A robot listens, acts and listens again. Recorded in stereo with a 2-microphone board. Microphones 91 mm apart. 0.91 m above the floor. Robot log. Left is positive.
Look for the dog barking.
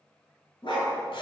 note: The dog barking: about 65° left or 115° left.
cmd yaw +65
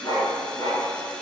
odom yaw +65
note: So it is at 45° left.
cmd yaw +45
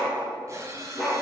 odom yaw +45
end: Found it: a dog barking, straight ahead.